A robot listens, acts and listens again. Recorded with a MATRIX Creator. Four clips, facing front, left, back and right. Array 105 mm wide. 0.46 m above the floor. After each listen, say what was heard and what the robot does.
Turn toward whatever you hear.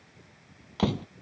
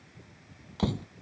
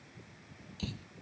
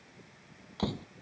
Found it: a door slam, straight ahead.